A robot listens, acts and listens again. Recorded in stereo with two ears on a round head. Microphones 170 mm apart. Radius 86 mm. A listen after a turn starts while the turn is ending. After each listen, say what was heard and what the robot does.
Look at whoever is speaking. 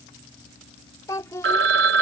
The child speaking: about 15° left or 165° left. Turn 15° left.
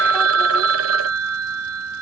Keep listening.
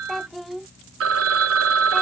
Found it: a child speaking, straight ahead.